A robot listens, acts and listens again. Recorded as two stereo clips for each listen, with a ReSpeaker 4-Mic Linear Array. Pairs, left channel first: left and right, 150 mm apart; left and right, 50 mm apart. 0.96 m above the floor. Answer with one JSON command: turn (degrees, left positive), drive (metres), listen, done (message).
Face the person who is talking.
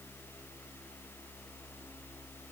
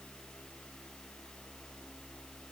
{"listen": true}
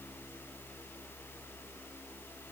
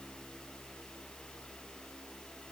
{"listen": true}
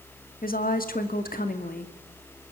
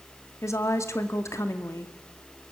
{"turn": 75}
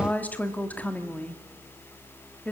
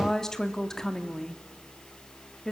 {"turn": 10}
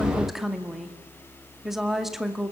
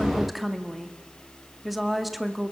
{"done": "Found it: a woman speaking, straight ahead."}